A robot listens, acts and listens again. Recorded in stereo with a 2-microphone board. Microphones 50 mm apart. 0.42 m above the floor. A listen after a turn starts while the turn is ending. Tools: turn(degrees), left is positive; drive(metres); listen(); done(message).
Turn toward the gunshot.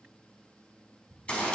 turn(degrees=25)
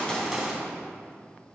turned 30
done("Found it: a gunshot, straight ahead.")